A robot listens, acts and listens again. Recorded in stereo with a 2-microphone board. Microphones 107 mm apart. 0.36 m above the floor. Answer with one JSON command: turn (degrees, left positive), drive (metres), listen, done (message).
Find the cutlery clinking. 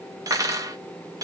{"turn": -30}
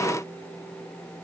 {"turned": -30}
{"listen": true}
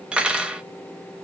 {"turn": -10}
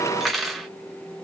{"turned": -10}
{"done": "Found it: cutlery clinking, straight ahead, under 1 m away."}